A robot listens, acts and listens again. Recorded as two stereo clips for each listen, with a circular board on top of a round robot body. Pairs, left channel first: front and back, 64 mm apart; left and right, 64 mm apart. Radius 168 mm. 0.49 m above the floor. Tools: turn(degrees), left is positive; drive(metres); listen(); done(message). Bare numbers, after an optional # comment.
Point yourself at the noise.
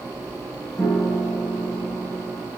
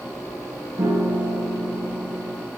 # The piano: 65° right.
turn(-65)
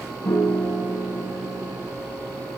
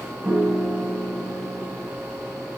# The piano is now 15° right.
turn(-15)
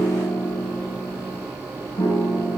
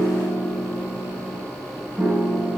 done("Found it: a piano, straight ahead, over 4 m away.")